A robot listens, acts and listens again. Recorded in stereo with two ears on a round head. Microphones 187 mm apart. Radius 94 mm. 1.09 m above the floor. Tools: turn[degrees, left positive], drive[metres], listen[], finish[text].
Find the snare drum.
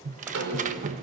Thought: The snare drum: about 65° right or 115° right.
Action: turn[-65]
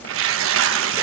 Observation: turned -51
Action: listen[]
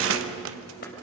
Action: listen[]
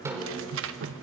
Thought: So it is at 15° right.
Action: turn[-15]
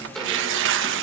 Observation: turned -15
Action: finish[Facing the snare drum, over 4 m away.]